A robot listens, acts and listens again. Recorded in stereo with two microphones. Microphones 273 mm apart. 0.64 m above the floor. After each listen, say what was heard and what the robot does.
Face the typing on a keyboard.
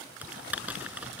Turn 30° right.
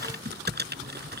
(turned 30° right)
So it is at 145° right. Turn 145° right.
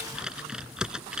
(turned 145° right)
Facing the typing on a keyboard.